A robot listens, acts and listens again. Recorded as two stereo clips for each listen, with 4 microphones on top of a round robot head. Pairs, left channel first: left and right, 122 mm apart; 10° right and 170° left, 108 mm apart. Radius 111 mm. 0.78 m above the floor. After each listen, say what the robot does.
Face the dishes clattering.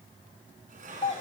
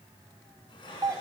Turn 65° right.
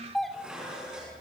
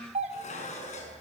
Facing the dishes clattering, over 4 m away.